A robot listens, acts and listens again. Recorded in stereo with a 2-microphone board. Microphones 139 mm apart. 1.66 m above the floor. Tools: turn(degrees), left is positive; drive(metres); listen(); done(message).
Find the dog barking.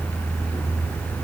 listen()
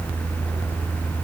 listen()
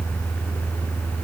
done("I can't make out a dog barking to turn to.")